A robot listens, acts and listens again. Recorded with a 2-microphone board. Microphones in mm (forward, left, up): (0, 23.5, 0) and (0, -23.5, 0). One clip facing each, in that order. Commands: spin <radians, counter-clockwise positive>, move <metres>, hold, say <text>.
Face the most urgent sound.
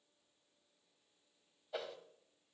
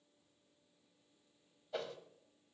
hold
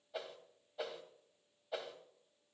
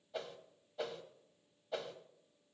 hold
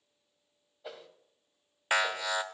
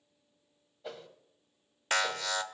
spin 0.52
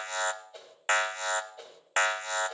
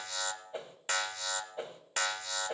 spin 2.27
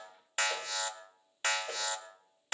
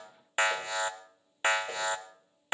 spin -0.44
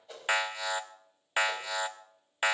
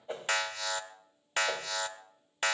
spin 0.26
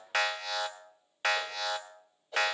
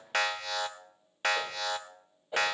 say Found it: an alarm, straight ahead.